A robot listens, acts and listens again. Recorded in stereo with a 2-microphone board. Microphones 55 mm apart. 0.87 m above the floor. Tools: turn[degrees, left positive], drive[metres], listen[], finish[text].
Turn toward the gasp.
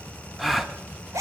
Action: turn[30]
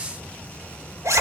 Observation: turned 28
Action: listen[]
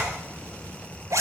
Action: finish[I heard a gasp, but can't make it out now. It was about 30° right or 155° left.]